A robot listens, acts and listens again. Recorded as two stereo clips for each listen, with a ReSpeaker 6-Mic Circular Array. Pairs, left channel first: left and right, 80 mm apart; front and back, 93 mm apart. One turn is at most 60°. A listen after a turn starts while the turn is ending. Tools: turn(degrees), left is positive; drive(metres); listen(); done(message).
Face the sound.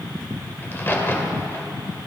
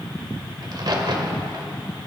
turn(degrees=60)
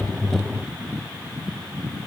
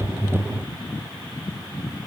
turn(degrees=60)
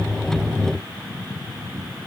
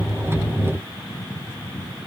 turn(degrees=25)
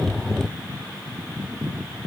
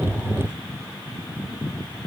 done("I heard a crack from this way, but can't make it out now.")